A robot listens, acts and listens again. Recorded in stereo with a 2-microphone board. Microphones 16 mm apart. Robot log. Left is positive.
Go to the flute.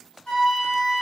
cmd yaw +90
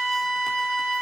cmd fwd 1.0
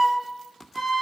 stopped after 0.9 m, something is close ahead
end: Arrived at the flute, straight ahead.